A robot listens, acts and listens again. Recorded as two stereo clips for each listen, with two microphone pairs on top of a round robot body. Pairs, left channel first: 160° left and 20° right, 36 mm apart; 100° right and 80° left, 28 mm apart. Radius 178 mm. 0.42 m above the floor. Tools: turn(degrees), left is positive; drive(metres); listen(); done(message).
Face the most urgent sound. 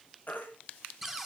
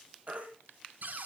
turn(degrees=115)
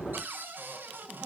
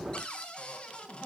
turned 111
listen()
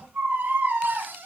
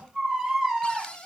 done("Facing the baby crying, over 4 m away.")